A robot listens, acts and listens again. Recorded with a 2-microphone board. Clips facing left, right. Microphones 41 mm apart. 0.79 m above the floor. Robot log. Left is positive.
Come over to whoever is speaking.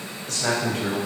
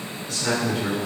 note: The man speaking: about 70° left or 110° left.
cmd yaw +70
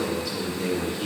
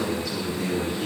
cmd fwd 1.0
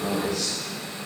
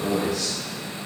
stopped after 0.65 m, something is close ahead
end: Something is in my way. I am facing the man speaking but have not reached it.